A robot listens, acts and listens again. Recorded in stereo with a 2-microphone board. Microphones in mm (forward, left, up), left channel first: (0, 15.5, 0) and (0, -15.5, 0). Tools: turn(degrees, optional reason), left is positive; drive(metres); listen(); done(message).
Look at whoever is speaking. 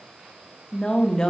turn(degrees=20, reason="The woman speaking: about 20° left or 160° left.")
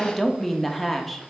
done("Facing the woman speaking.")